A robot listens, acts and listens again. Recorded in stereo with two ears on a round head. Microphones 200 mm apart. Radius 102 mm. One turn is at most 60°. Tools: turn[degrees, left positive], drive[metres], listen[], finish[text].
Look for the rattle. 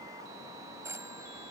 Action: listen[]
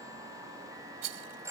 Thought: The rattle: about 65° right or 115° right.
Action: turn[-60]
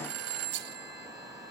Thought: So it is at 50° right.
Action: turn[-50]
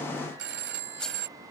Action: listen[]
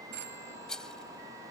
Action: finish[Found it: a rattle, straight ahead.]